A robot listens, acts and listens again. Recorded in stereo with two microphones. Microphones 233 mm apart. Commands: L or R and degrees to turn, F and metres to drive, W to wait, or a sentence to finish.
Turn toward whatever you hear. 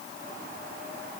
W
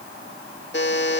L50
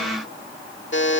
L70
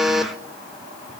Facing the buzzer, 1 to 2 m away.